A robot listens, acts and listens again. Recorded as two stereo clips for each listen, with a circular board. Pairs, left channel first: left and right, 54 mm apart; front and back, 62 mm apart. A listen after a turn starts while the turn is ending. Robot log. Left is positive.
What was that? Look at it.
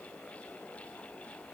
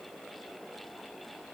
cmd idle
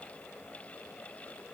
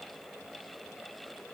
cmd idle
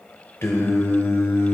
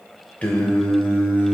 note: The singing: 60° left.
cmd yaw +60
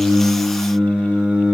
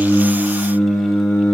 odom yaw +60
note: The singing is now 30° right.
cmd yaw -30
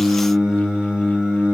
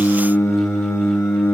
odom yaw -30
note: The singing is now 30° right.
cmd yaw -30
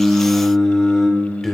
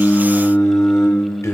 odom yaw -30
note: The singing is now 10° left.
cmd yaw +10
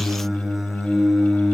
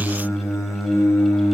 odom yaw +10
end: Found it: singing, straight ahead, 1 to 2 m away.